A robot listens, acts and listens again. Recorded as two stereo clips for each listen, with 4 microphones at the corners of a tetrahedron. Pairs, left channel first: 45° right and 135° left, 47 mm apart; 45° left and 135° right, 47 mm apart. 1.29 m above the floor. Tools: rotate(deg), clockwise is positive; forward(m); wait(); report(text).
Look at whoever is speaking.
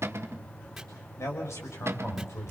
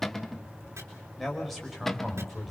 rotate(45)
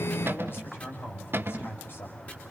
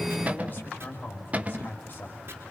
report("Found it: a man speaking, straight ahead.")